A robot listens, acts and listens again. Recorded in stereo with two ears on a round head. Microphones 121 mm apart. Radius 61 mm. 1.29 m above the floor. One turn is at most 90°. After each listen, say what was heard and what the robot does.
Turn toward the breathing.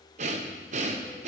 The breathing: about 55° right or 125° right. Turn 55° right.
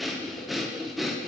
Found it: breathing, straight ahead.